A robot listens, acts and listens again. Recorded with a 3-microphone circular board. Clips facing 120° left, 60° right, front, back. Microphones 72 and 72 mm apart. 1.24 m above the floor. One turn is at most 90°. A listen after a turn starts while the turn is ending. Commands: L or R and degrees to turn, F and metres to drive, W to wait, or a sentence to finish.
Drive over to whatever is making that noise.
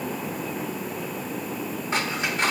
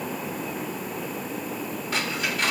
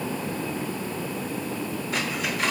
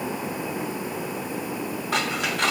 R90
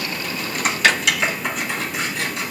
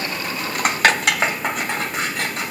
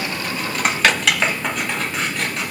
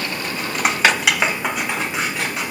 R90
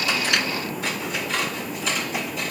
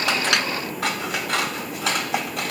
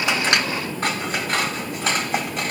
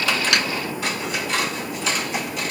R45
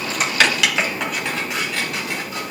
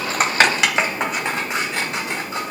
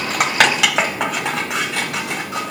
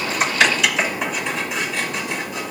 F1.0
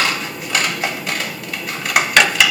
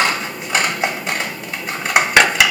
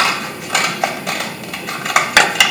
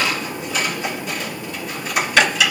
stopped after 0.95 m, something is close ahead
I am next to the scissors.